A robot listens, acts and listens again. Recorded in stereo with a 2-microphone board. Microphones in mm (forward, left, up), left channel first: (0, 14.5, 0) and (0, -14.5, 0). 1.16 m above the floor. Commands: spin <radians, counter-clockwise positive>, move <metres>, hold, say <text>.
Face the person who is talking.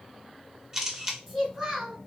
spin -0.52
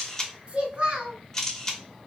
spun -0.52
spin -2.53
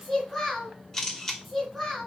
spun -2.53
say Found it: a child speaking, straight ahead.